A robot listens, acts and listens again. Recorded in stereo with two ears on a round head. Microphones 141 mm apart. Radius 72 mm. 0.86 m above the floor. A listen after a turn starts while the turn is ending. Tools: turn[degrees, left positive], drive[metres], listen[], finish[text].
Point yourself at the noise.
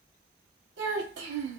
Action: turn[-90]
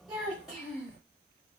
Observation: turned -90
Action: finish[Found it: a child speaking, straight ahead.]